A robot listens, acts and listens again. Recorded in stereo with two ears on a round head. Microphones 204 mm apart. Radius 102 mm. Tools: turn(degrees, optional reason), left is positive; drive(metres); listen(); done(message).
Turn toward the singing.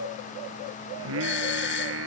turn(degrees=-60, reason="The singing: about 60° right or 120° right.")
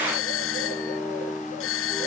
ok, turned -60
done("Facing the singing.")